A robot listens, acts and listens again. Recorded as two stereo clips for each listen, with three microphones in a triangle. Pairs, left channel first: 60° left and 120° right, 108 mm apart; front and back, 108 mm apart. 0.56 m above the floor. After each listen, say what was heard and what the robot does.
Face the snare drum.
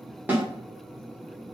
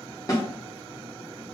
The snare drum: 50° right. Turn 50° right.
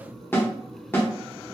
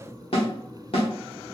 Facing the snare drum.